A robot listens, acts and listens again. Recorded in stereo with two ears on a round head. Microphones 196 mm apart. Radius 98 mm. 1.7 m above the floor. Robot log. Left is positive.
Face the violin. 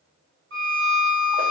note: The violin: about 55° right or 125° right.
cmd yaw -55
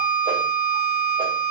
note: So it is at 65° right.
cmd yaw -65
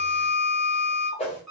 end: Facing the violin, 1 to 2 m away.